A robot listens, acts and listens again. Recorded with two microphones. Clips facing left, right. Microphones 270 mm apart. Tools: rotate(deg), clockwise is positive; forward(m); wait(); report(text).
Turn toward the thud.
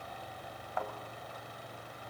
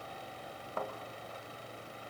rotate(45)
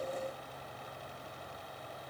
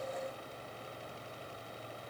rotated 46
wait()
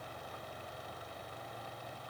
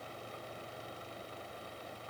report("I heard a thud, but can't make it out now. It was about straight ahead or 90° right.")